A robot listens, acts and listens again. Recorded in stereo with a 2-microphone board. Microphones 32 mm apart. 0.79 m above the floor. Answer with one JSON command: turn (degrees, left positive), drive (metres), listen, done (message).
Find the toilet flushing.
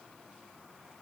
{"listen": true}
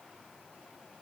{"listen": true}
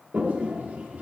{"turn": -50}
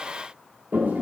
{"turn": -70}
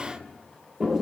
{"turn": -15}
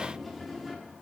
{"done": "Found it: a toilet flushing, straight ahead, 1 to 2 m away."}